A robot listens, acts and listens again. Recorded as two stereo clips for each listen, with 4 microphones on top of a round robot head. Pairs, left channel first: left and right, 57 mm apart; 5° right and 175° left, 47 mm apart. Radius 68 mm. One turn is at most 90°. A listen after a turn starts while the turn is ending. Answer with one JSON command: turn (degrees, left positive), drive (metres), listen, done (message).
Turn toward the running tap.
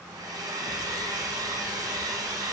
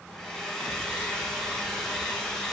{"listen": true}
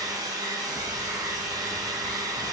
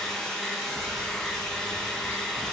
{"listen": true}
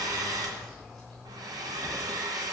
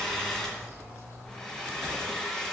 {"done": "I can't make out a running tap, only a hair dryer."}